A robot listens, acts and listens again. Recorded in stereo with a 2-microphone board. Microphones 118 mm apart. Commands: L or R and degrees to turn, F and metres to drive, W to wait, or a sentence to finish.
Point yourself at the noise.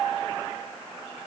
W
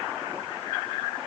W
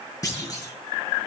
L30
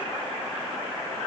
W
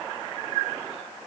I heard a clunk, but can't make it out now. It was about straight ahead or 120° left.